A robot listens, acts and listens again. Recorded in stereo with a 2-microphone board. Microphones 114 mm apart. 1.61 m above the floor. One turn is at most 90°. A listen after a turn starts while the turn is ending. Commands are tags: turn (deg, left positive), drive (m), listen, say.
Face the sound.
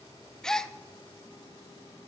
<turn deg="30"/>
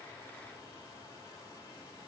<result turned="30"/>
<listen/>
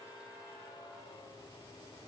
<say>I heard a gasp, but can't make it out now. It was about 25° right or 145° left.</say>